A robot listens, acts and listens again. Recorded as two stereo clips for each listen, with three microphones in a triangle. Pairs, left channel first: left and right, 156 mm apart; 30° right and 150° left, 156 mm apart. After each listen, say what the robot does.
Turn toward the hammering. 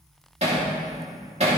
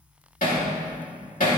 Turn 45° right.
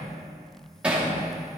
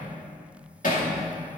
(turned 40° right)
Turn 10° right.
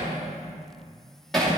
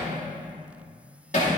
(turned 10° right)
Found it: hammering, straight ahead, 2 to 4 m away.